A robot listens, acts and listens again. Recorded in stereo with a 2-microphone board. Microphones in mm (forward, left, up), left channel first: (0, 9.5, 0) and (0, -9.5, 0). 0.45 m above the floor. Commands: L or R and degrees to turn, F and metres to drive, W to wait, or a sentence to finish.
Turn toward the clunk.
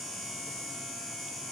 W
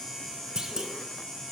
R40
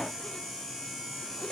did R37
W
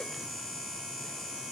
I heard a clunk, but can't make it out now. It was about 5° right or 100° right.